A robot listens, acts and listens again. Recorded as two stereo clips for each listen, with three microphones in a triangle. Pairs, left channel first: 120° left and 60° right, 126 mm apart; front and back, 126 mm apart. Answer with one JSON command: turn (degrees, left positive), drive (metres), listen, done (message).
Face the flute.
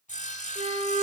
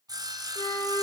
{"turn": -60}
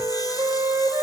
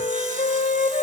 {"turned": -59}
{"done": "Facing the flute, 1 to 2 m away."}